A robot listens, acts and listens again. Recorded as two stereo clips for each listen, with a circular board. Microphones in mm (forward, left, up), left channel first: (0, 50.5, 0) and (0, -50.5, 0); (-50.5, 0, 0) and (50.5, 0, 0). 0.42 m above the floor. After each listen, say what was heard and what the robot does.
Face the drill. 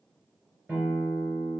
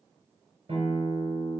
Keep listening.
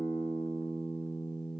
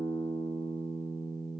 Keep listening.
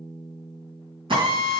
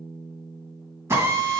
The drill: 60° right. Turn 60° right.
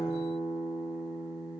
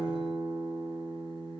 Keep listening.
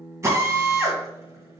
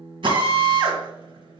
The drill is now 30° right. Turn 30° right.
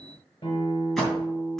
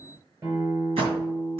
Found it: a drill, straight ahead, 2 to 4 m away.